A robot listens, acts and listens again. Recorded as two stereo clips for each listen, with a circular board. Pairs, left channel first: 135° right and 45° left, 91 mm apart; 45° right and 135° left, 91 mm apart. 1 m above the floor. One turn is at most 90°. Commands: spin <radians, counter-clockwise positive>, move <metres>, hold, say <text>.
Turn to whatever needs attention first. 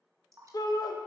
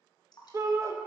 spin -1.57
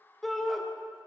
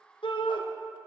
spin -0.79
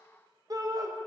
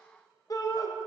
say Found it: a shout, straight ahead.